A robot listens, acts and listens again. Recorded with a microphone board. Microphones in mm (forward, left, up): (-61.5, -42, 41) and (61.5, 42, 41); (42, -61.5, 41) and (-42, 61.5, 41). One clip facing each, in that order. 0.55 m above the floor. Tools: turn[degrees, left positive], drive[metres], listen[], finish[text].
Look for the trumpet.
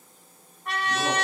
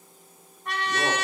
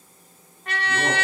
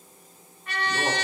Thought: The trumpet: 55° right.
Action: turn[-55]
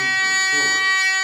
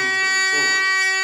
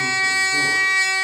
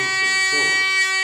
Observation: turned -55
Action: finish[Found it: a trumpet, straight ahead.]